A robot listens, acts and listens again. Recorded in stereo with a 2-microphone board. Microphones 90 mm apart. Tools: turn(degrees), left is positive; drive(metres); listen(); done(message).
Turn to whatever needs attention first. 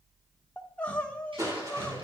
turn(degrees=30)
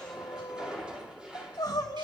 turn(degrees=135)
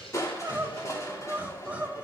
turn(degrees=-15)
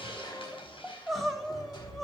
done("Facing the crying, 1 to 2 m away.")